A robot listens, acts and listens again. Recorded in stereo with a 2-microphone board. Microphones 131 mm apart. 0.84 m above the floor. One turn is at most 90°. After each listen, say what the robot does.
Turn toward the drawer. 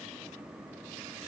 Keep listening.
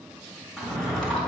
Turn 30° left.
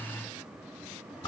Turn 90° left.
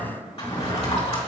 Turn 45° left.
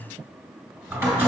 Turn 15° right.
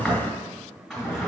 Facing the drawer.